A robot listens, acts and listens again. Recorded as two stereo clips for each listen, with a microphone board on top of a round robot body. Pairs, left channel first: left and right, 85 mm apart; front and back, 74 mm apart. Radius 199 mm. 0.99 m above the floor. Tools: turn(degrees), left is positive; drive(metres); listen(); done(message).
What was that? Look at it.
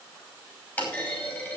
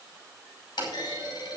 turn(degrees=20)
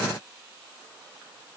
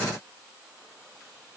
done("Facing where the clunk came from. I can't hear it now.")